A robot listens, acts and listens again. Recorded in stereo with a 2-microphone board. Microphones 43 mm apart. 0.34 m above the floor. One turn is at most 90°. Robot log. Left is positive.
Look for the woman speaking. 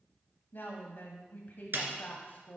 note: The woman speaking: about 50° left or 130° left.
cmd yaw +50
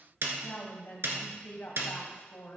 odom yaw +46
note: So it is at 70° left.
cmd yaw +70
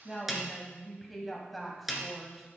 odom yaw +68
end: Facing the woman speaking.